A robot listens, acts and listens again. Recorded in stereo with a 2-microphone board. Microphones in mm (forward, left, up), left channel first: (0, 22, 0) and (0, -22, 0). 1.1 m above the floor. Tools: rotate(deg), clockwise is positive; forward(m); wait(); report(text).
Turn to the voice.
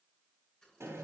wait()
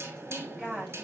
rotate(30)
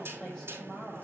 rotate(-15)
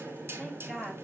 report("Facing the woman speaking, over 4 m away.")